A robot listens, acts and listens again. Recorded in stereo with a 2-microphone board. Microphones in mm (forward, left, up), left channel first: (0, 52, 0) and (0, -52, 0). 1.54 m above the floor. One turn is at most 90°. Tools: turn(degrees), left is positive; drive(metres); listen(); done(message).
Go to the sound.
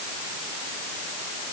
listen()
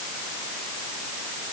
listen()
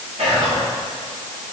turn(degrees=-90)
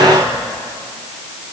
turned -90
drive(metres=1.0)
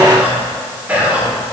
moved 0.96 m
turn(degrees=-15)
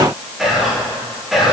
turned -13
drive(metres=1.0)
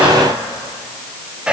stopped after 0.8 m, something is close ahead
turn(degrees=-10)
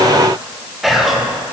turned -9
done("Arrived at the whispering, straight ahead.")